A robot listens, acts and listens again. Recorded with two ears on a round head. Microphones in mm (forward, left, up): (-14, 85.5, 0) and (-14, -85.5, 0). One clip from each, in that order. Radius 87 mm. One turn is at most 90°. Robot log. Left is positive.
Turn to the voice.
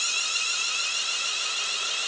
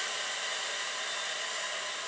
cmd idle
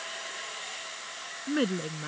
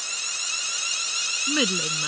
note: The woman speaking: about 60° right or 120° right.
cmd yaw -60
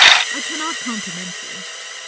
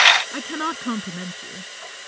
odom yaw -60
end: Found it: a woman speaking, straight ahead.